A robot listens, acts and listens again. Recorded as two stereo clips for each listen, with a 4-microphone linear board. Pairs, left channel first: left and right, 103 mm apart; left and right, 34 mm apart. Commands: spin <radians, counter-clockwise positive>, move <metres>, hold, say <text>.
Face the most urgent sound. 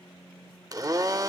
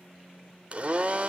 hold
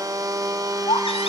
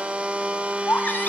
spin 1.13
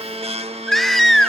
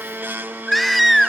say Facing the baby crying.